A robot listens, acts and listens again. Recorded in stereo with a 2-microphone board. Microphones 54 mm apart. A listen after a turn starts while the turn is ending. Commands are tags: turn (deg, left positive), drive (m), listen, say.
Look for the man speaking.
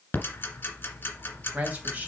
<turn deg="-30"/>
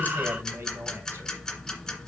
<listen/>
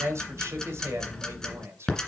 <turn deg="-120"/>
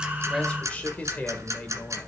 <turn deg="25"/>
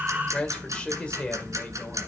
<turn deg="20"/>
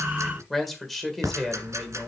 <say>Found it: a man speaking, straight ahead, 1 to 2 m away.</say>